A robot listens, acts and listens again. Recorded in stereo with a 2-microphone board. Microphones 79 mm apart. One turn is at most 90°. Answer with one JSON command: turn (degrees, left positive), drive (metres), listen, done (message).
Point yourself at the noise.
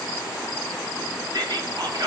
{"turn": -60}
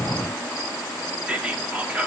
{"turn": -15}
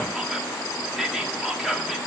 {"done": "Found it: whispering, straight ahead, 1 to 2 m away."}